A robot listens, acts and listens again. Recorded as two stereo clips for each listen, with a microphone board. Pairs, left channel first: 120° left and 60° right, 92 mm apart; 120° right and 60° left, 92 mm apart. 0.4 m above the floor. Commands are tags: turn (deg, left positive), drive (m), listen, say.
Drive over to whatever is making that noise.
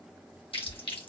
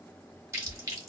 <turn deg="115"/>
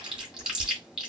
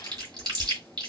<turn deg="20"/>
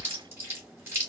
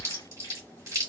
<drive m="1.0"/>
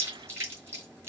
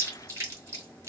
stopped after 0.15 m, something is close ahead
<say>Something is in my way. I am facing the chewing but have not reached it.</say>